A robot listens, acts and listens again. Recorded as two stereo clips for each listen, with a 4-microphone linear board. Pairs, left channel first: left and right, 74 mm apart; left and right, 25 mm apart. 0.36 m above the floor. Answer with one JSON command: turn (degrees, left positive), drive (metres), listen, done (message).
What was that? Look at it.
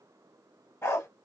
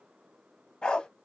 {"turn": 35}
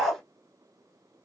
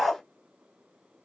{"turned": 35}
{"done": "Facing the dog barking, 1 to 2 m away."}